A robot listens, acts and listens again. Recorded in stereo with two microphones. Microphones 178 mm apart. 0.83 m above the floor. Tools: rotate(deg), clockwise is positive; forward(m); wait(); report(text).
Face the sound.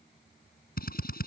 rotate(-55)
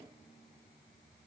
wait()
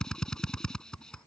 report("Facing the drill.")